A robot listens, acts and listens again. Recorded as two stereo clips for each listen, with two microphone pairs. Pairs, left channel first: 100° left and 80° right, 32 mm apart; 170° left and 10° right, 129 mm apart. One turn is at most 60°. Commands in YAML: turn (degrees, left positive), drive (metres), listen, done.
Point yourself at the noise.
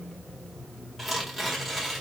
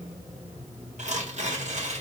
turn: 10
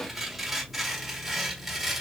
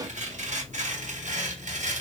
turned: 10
done: "Facing the tearing paper, 1 to 2 m away."